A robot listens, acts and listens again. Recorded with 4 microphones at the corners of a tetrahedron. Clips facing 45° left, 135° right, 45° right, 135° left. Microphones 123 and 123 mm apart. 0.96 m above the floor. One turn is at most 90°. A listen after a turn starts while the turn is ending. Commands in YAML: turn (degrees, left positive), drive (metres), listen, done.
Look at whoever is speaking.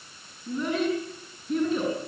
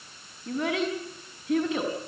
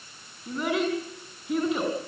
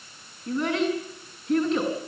turn: -90
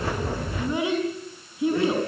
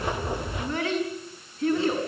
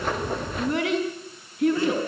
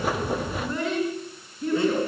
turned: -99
turn: -30
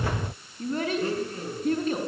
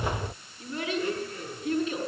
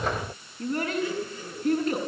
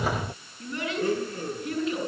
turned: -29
done: "Facing the child speaking, over 4 m away."